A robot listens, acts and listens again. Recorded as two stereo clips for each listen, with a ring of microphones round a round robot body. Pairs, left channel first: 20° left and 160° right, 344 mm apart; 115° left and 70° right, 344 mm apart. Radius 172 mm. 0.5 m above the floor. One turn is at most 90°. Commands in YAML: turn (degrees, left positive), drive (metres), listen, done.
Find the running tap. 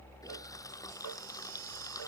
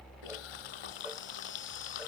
turn: 90
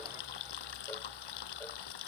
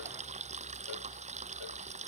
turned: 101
done: "Found it: a running tap, straight ahead."